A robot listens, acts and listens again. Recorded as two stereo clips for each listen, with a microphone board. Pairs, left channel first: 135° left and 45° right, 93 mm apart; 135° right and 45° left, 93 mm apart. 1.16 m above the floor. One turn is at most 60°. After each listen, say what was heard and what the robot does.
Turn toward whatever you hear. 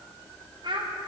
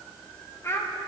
The child speaking: 75° right. Turn 60° right.
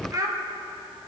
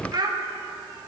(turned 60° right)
Found it: a child speaking, straight ahead.